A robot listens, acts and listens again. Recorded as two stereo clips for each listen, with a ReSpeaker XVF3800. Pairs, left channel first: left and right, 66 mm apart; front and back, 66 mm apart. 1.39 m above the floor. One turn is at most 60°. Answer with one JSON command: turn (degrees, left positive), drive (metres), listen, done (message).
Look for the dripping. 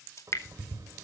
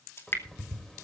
{"turn": 50}
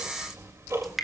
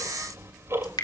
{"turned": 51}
{"done": "Found it: dripping, straight ahead."}